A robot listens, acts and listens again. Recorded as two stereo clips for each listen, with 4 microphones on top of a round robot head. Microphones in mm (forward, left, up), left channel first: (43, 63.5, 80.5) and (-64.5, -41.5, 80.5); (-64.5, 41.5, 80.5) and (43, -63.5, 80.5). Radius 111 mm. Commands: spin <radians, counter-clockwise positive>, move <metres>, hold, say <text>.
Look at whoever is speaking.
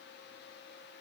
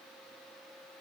hold
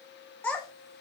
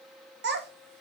spin -0.70
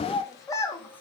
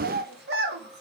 spin -0.52
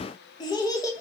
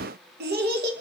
spin -0.44
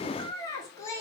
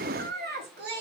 spin -0.52
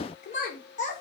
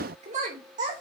say Facing the child speaking.